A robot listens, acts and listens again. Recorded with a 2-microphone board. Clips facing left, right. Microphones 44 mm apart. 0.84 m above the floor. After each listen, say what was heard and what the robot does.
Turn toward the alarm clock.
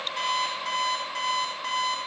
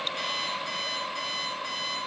The alarm clock: about 70° left or 110° left. Turn 70° left.
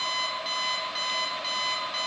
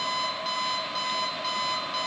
Facing the alarm clock.